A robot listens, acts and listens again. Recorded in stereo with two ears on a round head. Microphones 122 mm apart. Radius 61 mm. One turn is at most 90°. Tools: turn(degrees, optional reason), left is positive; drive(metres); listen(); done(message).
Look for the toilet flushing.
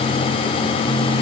listen()
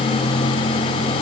listen()
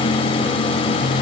done("I can't make out a toilet flushing.")